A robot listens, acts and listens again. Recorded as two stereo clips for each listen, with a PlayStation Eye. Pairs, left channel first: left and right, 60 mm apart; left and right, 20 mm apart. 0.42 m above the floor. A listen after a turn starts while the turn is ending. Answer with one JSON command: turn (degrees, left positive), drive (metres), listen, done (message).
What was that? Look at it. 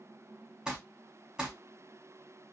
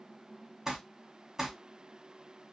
{"turn": -30}
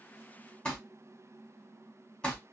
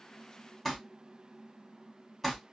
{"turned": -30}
{"turn": 15}
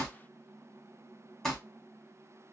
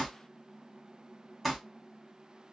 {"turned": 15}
{"done": "Found it: crumpling, straight ahead, 2 to 4 m away."}